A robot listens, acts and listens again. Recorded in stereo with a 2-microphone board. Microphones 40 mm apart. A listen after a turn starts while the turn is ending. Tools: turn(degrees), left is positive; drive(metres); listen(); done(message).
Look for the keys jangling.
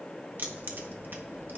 turn(degrees=-50)
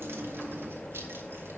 turn(degrees=-80)
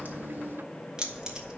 turn(degrees=-20)
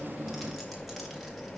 done("Facing the keys jangling.")